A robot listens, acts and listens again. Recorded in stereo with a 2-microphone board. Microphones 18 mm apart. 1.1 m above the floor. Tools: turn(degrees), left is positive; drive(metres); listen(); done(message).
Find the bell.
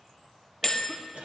turn(degrees=30)
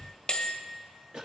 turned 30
turn(degrees=135)
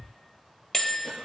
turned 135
turn(degrees=30)
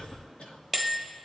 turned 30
turn(degrees=10)
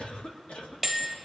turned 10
done("Found it: a bell, straight ahead.")